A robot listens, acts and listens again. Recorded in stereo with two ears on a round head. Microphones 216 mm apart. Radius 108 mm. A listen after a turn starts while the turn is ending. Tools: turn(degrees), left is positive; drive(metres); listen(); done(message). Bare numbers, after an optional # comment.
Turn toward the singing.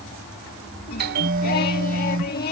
# The singing: about 40° left or 140° left.
turn(40)
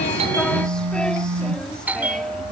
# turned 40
listen()
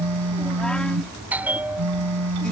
listen()
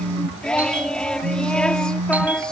done("Found it: singing, straight ahead.")